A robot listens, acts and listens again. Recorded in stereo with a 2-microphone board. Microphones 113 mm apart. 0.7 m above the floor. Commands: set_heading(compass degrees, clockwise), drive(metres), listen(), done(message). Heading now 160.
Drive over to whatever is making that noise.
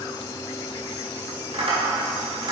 set_heading(210)
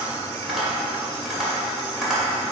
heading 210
drive(1.0)
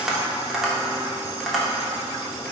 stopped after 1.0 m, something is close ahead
done("I am next to the tapping.")